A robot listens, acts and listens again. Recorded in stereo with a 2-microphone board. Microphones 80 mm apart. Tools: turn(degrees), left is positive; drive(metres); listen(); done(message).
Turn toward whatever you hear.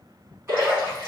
turn(degrees=-30)
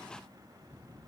listen()
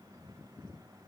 done("I heard a splash, but can't make it out now. It was about straight ahead or 120° right.")